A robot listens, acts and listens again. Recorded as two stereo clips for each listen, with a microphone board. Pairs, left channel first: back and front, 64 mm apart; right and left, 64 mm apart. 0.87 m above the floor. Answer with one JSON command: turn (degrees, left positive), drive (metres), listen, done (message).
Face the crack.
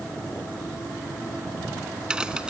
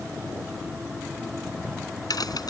{"turn": -75}
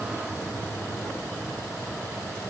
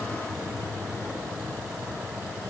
{"done": "I heard a crack from this way, but can't make it out now."}